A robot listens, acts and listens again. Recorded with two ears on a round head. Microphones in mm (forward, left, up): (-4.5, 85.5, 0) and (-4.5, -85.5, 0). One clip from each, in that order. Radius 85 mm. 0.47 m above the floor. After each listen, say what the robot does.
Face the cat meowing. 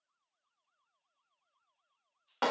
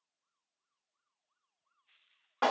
Keep listening.
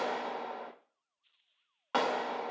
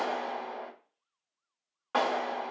Keep listening.
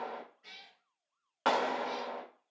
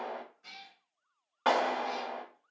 Turn 30° right.
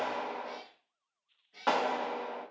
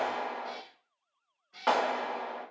Turn 140° right.
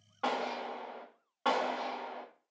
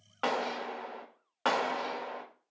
Keep listening.
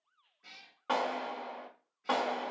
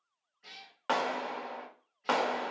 Turn 20° right.
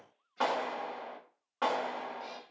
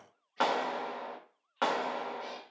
Found it: a cat meowing, straight ahead.